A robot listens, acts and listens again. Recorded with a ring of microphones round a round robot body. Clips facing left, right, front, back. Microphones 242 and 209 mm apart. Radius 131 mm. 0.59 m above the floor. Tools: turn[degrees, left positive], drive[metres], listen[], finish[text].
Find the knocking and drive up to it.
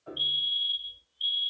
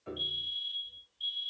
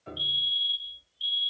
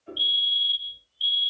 Action: listen[]
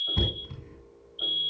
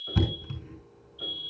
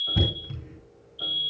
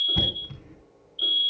Thought: The knocking: 75° right.
Action: turn[-75]
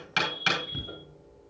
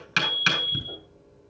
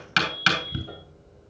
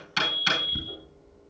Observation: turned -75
Thought: The knocking is now 25° right.
Action: turn[-25]
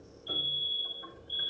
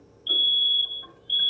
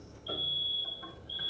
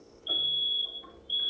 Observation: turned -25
Action: listen[]
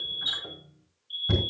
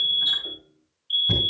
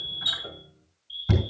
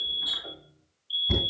Action: drive[1.0]
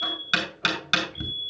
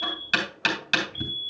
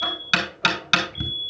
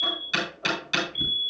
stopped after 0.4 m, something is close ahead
Thought: The knocking is now 10° left.
Action: turn[10]
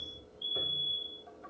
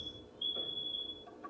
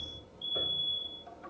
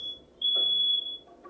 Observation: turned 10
Action: listen[]
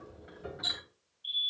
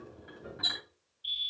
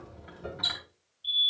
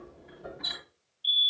Action: finish[Something is in my way. I am facing the knocking but have not reached it.]